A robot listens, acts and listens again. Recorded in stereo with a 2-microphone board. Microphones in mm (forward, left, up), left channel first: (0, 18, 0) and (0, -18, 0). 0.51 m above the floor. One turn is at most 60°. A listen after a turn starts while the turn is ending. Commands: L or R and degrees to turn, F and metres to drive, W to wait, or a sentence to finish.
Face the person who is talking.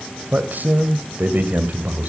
R55
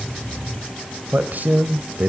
R60
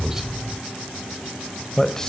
L20
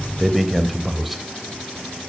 Facing the man speaking.